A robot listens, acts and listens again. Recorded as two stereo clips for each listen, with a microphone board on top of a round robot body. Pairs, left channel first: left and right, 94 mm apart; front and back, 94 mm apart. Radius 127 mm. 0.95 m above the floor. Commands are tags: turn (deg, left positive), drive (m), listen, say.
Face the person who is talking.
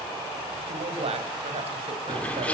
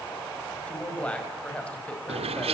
<turn deg="-80"/>
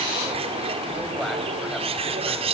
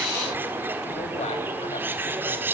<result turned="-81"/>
<listen/>
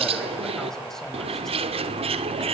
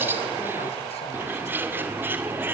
<listen/>
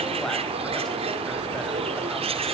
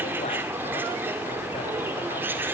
<say>Facing where the man speaking came from. I can't hear it now.</say>